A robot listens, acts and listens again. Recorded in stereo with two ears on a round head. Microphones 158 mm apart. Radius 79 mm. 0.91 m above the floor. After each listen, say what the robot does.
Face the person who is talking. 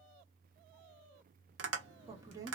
Turn 20° right.
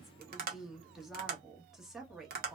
Found it: a woman speaking, straight ahead.